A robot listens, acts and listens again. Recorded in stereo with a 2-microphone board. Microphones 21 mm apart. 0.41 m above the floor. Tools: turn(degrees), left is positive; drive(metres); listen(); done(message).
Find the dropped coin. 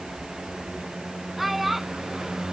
listen()
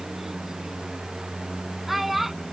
listen()
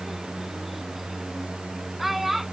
done("I can't make out a dropped coin to turn to.")